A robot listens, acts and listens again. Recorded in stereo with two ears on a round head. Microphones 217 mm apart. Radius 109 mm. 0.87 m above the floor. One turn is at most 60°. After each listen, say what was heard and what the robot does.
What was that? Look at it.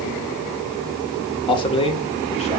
The man speaking: about 25° left or 155° left. Turn 25° left.
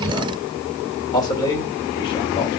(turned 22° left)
The man speaking: about 15° left or 165° left. Turn 15° left.
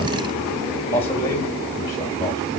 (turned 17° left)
Turn 30° left.
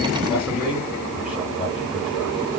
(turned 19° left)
So it is at 10° right. Turn 10° right.
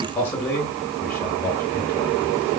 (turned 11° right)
Found it: a man speaking, straight ahead.